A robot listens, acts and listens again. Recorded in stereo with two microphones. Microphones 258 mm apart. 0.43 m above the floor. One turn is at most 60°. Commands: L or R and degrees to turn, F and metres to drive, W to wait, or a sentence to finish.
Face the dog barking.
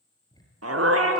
R60
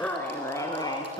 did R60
L20
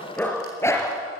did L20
L10
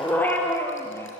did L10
L10
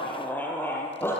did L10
L10
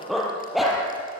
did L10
Facing the dog barking, 2 to 4 m away.